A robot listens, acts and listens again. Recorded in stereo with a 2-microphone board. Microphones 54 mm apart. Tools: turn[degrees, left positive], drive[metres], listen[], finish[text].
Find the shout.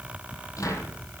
Action: listen[]
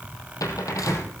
Action: listen[]
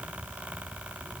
Action: finish[I can't make out a shout, only a cupboard door.]